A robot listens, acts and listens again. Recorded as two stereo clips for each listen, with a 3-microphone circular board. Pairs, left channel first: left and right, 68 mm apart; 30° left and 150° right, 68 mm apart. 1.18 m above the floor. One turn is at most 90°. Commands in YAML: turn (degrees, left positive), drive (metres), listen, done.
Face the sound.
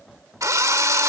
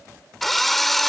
turn: -55
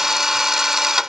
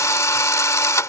done: "Facing the drill."